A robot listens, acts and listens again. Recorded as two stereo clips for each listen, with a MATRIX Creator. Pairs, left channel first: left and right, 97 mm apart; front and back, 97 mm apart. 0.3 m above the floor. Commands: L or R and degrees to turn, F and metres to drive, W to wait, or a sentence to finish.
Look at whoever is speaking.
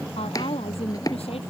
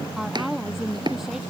L95
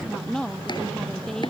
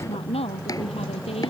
Facing the woman speaking.